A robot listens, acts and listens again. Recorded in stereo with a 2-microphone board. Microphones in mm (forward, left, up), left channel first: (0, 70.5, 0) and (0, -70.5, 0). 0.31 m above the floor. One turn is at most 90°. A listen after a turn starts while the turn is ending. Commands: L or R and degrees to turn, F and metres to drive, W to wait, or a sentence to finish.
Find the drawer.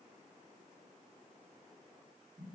W
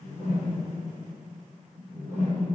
W
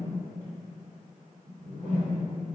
I can't make out a drawer, only a whoosh.